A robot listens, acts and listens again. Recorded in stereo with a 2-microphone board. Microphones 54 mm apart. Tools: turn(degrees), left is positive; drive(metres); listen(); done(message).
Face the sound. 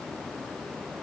listen()
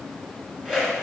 turn(degrees=-30)
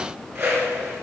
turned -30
turn(degrees=-140)
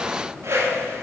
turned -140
turn(degrees=-45)
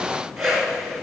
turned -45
done("Facing the whoosh, 2 to 4 m away.")